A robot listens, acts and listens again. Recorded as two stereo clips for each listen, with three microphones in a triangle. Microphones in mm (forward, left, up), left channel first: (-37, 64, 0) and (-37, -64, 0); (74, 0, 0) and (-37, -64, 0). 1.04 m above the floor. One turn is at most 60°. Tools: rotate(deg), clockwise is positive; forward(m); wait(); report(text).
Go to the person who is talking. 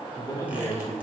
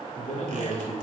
rotate(-30)
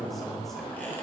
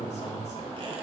forward(1.0)
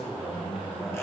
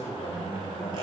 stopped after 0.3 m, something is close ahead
report("Something is in my way. I am facing the man speaking but have not reached it.")